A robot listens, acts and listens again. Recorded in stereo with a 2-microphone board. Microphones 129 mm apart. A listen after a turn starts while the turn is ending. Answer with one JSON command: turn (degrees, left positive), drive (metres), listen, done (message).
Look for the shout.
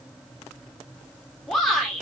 {"turn": 30}
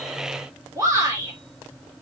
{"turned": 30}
{"turn": -25}
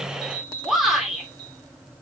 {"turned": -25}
{"done": "Facing the shout, 2 to 4 m away."}